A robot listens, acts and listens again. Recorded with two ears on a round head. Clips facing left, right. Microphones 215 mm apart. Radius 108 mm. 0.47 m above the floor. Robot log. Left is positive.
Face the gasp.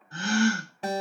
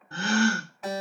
note: The gasp: about 50° right or 130° right.
cmd yaw -50
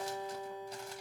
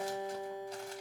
cmd idle
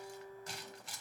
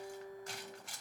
end: I heard a gasp, but can't make it out now. It was about straight ahead or 80° right.